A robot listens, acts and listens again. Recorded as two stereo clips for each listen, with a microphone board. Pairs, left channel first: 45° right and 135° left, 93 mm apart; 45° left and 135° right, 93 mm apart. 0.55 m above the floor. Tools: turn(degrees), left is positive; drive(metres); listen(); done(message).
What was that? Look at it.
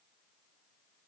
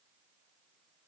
listen()
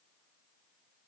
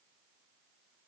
listen()
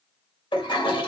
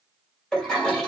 turn(degrees=-35)
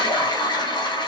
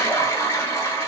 turn(degrees=-15)
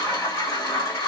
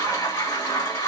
done("Found it: a toilet flushing, straight ahead.")